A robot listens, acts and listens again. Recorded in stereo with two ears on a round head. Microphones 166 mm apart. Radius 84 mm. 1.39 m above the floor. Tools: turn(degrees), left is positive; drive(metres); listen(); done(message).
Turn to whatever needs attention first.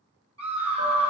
turn(degrees=-35)
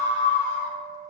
turn(degrees=-110)
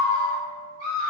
turn(degrees=25)
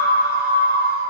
turn(degrees=-10)
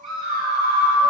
done("Facing the scream, 1 to 2 m away.")